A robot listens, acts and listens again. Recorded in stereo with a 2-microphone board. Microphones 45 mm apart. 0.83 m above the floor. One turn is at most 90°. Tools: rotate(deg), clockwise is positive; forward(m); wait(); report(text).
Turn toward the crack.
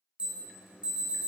wait()
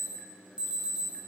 wait()
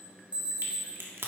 rotate(65)
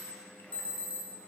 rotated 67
wait()
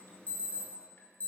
report("I heard a crack, but can't make it out now. It was about straight ahead or 45° right.")